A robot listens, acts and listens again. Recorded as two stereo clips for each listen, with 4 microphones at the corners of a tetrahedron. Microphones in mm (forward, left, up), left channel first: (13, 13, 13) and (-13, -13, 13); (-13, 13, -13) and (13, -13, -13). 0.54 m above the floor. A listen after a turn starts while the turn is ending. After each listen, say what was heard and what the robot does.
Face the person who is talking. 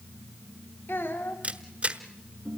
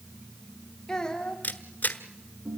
The child speaking: 65° left. Turn 65° left.
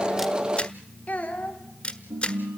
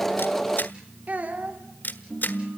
Facing the child speaking, 2 to 4 m away.